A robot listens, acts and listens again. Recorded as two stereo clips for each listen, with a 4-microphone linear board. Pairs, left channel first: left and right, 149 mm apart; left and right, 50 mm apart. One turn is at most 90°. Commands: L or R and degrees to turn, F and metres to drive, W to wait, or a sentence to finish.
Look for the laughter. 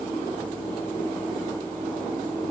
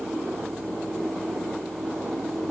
W
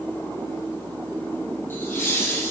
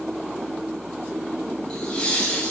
L15
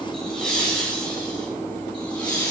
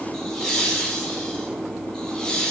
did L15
L30
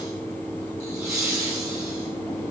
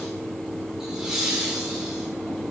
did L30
R20
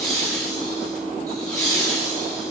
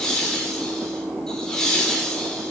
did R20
Found it: laughter, straight ahead.